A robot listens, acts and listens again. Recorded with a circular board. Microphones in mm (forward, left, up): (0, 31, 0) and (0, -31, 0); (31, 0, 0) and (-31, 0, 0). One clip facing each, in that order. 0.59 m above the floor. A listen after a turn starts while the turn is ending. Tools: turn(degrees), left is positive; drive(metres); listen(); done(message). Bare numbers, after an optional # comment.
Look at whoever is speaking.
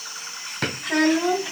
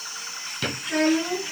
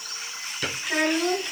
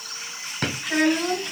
# The child speaking: 85° left.
turn(85)
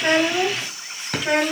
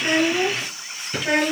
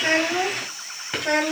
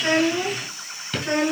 done("Found it: a child speaking, straight ahead, 1 to 2 m away.")